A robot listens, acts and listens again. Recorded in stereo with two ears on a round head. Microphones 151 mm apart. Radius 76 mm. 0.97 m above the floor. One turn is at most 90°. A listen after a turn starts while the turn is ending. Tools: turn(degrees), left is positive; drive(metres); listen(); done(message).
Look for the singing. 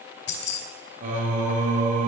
turn(degrees=-45)
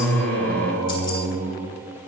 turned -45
turn(degrees=-75)
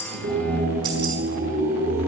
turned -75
turn(degrees=-45)
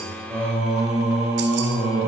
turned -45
done("Found it: singing, straight ahead.")